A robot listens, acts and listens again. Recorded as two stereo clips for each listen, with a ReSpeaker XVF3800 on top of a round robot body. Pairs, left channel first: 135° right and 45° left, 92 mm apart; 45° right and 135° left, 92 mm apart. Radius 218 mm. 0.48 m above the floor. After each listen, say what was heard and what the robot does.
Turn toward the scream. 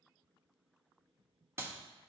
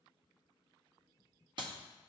Keep listening.
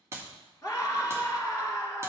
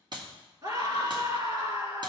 The scream: 170° left. Turn 170° left.
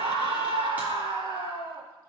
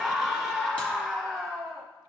The scream is now 40° left. Turn 40° left.
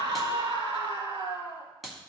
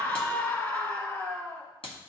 The scream is now 20° left. Turn 20° left.
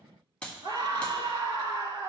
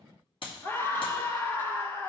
The scream is now 10° left. Turn 10° left.
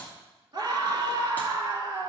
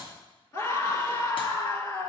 Found it: a scream, straight ahead.